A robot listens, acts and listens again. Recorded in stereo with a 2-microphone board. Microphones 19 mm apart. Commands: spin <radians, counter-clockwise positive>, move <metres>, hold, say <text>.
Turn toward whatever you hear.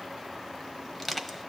spin 0.26
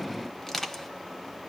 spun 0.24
spin 2.62
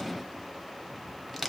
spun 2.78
spin -0.17
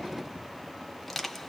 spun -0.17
say Facing the crushing, under 1 m away.